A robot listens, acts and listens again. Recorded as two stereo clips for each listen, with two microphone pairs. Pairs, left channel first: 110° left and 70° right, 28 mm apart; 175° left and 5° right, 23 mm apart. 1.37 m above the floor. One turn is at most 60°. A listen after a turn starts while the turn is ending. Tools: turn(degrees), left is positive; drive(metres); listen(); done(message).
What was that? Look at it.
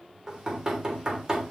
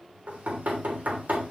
done("Facing the knocking.")